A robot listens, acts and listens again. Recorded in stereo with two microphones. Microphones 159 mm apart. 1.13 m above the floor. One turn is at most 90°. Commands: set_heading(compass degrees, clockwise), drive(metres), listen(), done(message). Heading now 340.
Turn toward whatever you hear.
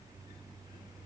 listen()
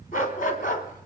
set_heading(280)
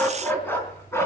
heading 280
set_heading(265)
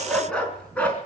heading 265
set_heading(255)
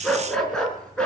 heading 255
done("Facing the dog barking.")